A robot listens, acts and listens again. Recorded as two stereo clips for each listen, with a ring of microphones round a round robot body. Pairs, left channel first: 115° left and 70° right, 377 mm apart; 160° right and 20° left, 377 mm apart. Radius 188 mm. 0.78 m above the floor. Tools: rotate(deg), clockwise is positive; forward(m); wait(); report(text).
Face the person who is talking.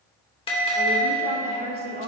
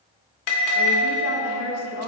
rotate(130)
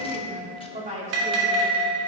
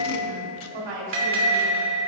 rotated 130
report("Facing the woman speaking.")